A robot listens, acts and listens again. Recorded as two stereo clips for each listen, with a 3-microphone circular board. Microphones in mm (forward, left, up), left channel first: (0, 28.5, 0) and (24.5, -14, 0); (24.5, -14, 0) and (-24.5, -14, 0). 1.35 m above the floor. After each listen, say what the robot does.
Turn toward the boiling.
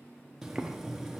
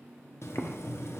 Turn 20° left.
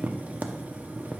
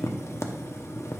Found it: boiling, straight ahead.